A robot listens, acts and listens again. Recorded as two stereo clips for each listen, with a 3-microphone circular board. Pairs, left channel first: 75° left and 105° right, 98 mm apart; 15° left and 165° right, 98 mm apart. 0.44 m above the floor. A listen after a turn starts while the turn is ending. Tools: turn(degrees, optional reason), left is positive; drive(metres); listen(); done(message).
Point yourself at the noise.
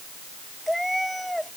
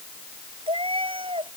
turn(degrees=165, reason="The cat meowing: 165° left.")
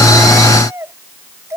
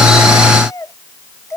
turn(degrees=-45, reason="The cat meowing is now 45° right.")
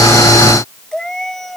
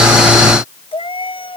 turn(degrees=-10, reason="The cat meowing is now 10° right.")
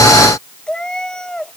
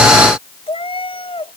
turn(degrees=-10, reason="The cat meowing is now 10° right.")
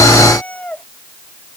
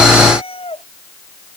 done("Found it: a cat meowing, straight ahead.")